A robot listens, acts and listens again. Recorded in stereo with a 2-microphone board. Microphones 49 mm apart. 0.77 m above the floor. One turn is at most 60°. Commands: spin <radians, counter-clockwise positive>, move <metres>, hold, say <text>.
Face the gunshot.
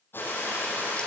spin 0.79
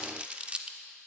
hold
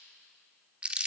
say I heard a gunshot, but can't make it out now. It was about straight ahead or 90° left.